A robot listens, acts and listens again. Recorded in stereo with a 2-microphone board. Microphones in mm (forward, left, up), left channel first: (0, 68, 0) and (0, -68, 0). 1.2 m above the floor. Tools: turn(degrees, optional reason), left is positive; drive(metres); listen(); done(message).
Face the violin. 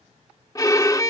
turn(degrees=25, reason="The violin: about 25° left or 155° left.")
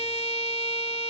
turn(degrees=130, reason="So it is at 130° left.")
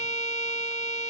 turn(degrees=65, reason="The violin is now 65° left.")
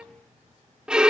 done("Found it: a violin, straight ahead.")